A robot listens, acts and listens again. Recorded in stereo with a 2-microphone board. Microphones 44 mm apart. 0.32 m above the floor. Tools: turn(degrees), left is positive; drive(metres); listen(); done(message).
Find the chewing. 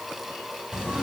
listen()
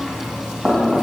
listen()
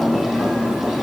done("I can't make out chewing, only knocking.")